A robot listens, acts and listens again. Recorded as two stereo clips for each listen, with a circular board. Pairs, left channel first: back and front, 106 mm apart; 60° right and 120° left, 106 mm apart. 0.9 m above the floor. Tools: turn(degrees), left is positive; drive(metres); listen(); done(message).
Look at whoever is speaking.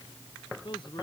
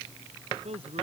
turn(degrees=135)
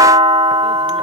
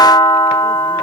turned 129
turn(degrees=10)
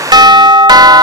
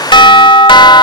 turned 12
listen()
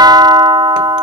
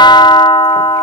done("I heard a man speaking from this way, but can't make it out now.")